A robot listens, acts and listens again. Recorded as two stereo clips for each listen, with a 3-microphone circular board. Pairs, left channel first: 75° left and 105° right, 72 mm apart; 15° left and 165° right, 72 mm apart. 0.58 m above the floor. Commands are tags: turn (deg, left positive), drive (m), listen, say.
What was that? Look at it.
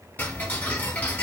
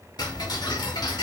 <turn deg="10"/>
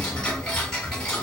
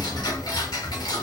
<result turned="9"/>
<say>Facing the ticking, 1 to 2 m away.</say>